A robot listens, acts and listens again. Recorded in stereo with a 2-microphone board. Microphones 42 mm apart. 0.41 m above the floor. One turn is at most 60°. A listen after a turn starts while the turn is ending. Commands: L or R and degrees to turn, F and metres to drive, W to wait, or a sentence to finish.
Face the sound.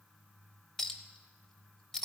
L30
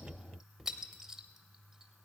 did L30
R15
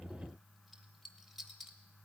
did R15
Facing the clink, under 1 m away.